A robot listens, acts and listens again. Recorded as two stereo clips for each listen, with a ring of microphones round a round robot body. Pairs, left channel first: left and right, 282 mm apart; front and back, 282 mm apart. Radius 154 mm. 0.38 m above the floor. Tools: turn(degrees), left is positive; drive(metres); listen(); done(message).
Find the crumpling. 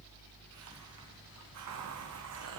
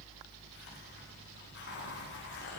listen()
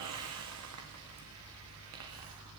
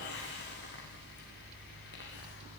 listen()
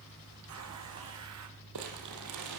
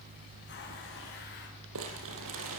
turn(degrees=-130)
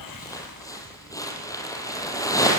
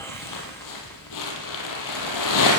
turn(degrees=10)
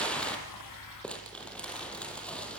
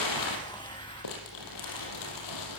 done("Found it: crumpling, straight ahead, over 4 m away.")